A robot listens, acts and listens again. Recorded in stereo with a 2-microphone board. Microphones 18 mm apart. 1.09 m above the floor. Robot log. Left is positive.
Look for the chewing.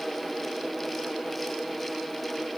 cmd idle
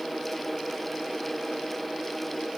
cmd idle
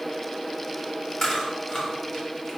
note: The chewing: about 30° left or 150° left.
cmd yaw +30
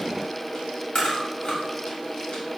note: So it is at 120° left.
cmd yaw +120
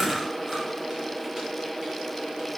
cmd idle
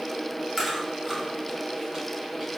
note: The chewing is now 20° right.
cmd yaw -20
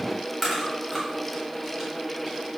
end: Found it: chewing, straight ahead.